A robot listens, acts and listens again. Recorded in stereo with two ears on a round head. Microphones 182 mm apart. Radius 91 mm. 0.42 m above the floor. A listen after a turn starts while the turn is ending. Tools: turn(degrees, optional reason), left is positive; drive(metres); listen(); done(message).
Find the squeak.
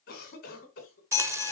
turn(degrees=15, reason="The squeak: about 15° left or 165° left.")
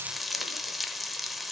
listen()
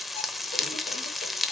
listen()
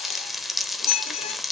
turn(degrees=150, reason="So it is at 150° left.")
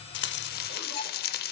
listen()
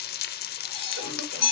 turn(degrees=30, reason="The squeak is now 30° left.")
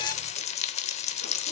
listen()
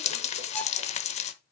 listen()
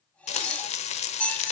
done("Found it: a squeak, straight ahead.")